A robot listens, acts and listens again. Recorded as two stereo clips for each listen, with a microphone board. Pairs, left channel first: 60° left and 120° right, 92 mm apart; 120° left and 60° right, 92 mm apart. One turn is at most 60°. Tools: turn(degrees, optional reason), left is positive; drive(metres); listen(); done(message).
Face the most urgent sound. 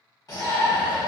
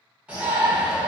turn(degrees=15, reason="The shout: 15° left.")
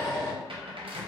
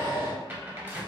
done("Facing the shout.")